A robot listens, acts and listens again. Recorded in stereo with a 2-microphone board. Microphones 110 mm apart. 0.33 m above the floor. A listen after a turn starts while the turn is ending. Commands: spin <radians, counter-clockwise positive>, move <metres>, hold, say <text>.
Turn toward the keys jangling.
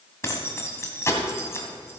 spin 0.44
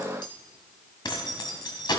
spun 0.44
spin 2.18
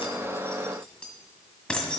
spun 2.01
spin 0.17
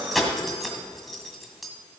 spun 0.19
say Facing the keys jangling.